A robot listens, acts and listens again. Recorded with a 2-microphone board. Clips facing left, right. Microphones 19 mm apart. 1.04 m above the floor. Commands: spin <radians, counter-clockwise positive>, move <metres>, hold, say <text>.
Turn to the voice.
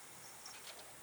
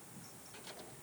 hold
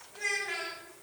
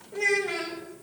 spin -0.70
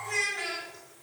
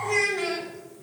say Found it: a child speaking, straight ahead, 1 to 2 m away.